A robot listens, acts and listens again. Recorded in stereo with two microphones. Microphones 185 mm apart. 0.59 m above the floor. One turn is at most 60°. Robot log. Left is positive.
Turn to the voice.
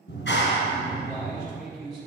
cmd yaw +30
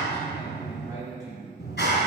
note: So it is at 15° right.
cmd yaw -15
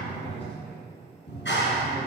cmd idle
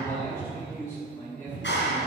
note: The man speaking is now 15° left.
cmd yaw +15
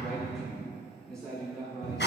end: Facing the man speaking, over 4 m away.